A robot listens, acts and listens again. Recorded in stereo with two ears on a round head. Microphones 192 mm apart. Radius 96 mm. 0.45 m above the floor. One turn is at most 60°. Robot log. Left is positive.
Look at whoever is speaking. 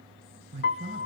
note: The man speaking: about 30° right or 150° right.
cmd yaw -30
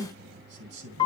note: So it is at 120° right.
cmd yaw -60
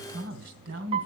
note: The man speaking is now 70° right.
cmd yaw -60
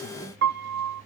note: Nothing new. It was at 10° right.
cmd yaw -10
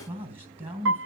note: The man speaking is now 30° right.
cmd yaw -30
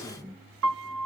end: Facing the man speaking.